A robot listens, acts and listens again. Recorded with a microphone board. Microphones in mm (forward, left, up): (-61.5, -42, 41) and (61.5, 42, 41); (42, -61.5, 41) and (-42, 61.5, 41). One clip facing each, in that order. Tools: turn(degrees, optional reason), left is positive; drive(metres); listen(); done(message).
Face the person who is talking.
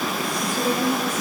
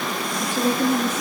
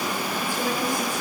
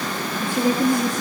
turn(degrees=55, reason="The woman speaking: 55° left.")
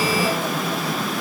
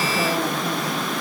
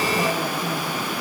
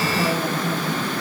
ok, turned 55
listen()
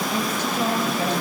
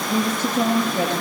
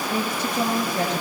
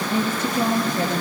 done("Found it: a woman speaking, straight ahead.")